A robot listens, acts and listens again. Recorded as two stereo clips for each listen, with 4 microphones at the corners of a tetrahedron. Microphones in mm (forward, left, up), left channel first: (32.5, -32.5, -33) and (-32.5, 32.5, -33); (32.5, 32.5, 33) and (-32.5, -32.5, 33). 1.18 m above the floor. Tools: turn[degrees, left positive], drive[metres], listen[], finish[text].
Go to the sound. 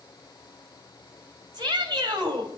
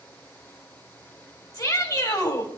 Thought: The shout: 90° left.
Action: turn[90]
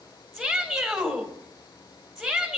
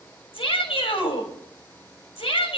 Thought: The shout is now 45° left.
Action: turn[45]
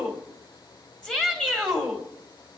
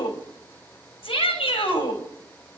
Thought: The shout is now 35° left.
Action: turn[35]
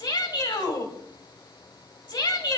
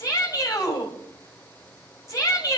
Thought: The shout is now 10° right.
Action: turn[-10]
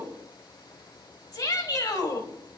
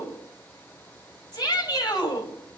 Action: drive[1.0]
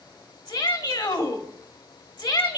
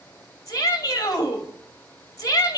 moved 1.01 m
Thought: The shout is now 10° right.
Action: turn[-10]
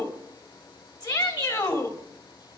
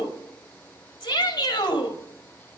Action: drive[1.0]
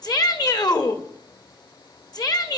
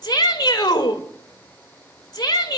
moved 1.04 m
Action: drive[1.0]
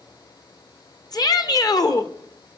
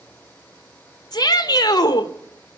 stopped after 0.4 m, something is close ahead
Action: finish[I am next to the shout.]